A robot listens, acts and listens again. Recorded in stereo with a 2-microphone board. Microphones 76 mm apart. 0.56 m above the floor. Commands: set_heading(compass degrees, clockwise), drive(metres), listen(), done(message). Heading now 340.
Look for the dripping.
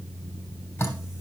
set_heading(310)
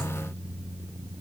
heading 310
listen()
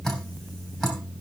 done("Found it: dripping, straight ahead.")